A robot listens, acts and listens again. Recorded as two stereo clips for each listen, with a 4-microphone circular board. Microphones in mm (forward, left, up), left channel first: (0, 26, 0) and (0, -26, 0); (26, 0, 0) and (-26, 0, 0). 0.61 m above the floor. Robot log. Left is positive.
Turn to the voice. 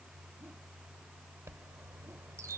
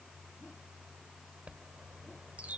cmd idle
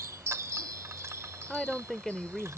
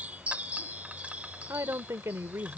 note: The woman speaking: 170° left.
cmd yaw +170
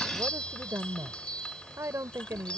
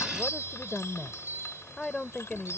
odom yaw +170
note: The woman speaking is now 70° right.
cmd yaw -70
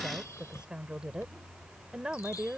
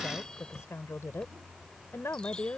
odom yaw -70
note: The woman speaking is now 20° right.
cmd yaw -20
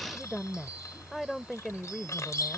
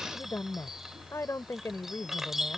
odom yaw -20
end: Facing the woman speaking.